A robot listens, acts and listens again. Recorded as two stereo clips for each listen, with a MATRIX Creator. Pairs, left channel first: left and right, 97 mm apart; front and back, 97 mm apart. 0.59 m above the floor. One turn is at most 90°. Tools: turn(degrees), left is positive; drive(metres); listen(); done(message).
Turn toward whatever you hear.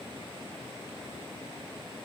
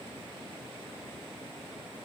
listen()
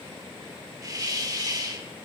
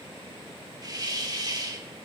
turn(degrees=-90)
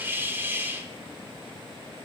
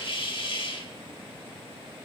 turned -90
turn(degrees=-25)
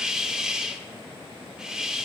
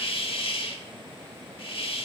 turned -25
turn(degrees=-10)
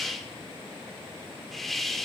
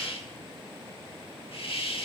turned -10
done("Facing the hiss, 1 to 2 m away.")